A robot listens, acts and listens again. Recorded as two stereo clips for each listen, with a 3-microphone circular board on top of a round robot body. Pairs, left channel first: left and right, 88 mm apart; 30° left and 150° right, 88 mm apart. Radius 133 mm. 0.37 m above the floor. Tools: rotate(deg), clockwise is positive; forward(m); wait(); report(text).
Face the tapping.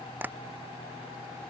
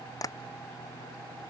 rotate(20)
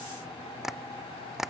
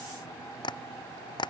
report("Facing the tapping.")